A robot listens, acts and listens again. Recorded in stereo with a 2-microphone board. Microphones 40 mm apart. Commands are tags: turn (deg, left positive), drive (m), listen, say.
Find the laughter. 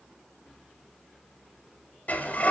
<listen/>
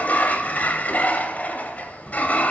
<listen/>
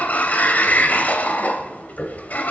<say>I can't make out laughter to turn to.</say>